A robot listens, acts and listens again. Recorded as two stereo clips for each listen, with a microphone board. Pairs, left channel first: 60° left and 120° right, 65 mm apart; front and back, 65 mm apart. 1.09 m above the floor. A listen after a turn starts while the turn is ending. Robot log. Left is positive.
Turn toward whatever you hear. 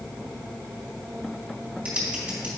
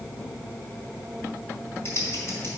note: The typing on a keyboard: 50° right.
cmd yaw -50
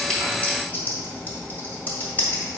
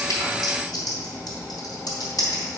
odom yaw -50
end: Found it: typing on a keyboard, straight ahead, 2 to 4 m away.